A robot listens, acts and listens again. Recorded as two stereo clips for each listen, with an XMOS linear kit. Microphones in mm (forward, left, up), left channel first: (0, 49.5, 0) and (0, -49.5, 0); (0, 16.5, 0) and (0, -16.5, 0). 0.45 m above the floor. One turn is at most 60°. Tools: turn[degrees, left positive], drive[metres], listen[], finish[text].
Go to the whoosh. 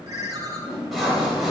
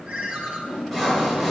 Thought: The whoosh: about 40° left or 140° left.
Action: turn[40]
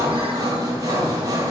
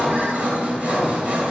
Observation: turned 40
Action: listen[]
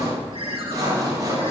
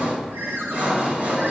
Action: listen[]
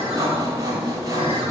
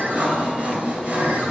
Action: finish[I heard a whoosh, but can't make it out now. It was about straight ahead or 100° left. I did not reach it.]